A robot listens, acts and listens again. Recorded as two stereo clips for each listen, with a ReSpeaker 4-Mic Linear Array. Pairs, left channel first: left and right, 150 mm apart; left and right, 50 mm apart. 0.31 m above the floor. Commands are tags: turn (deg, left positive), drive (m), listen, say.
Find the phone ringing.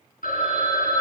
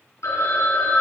<turn deg="70"/>
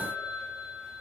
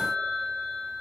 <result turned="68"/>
<turn deg="30"/>
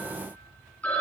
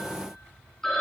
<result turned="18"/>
<turn deg="10"/>
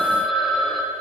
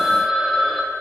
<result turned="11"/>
<say>Found it: a phone ringing, straight ahead.</say>